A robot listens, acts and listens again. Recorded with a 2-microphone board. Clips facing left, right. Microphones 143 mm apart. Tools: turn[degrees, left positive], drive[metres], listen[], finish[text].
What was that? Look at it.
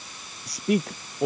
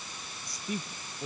Action: turn[90]
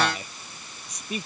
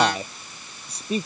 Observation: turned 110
Thought: So it is at 30° right.
Action: turn[-30]
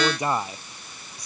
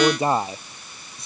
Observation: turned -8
Thought: The man speaking is now 25° right.
Action: turn[-25]
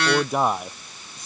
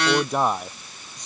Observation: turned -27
Action: finish[Facing the man speaking.]